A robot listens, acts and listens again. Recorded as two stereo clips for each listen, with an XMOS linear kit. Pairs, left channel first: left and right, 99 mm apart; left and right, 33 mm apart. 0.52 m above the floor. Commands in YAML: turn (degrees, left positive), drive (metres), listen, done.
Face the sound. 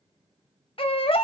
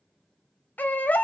turn: 55
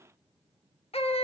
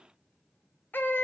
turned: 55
turn: 70
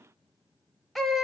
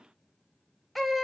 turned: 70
done: "Facing the baby crying, under 1 m away."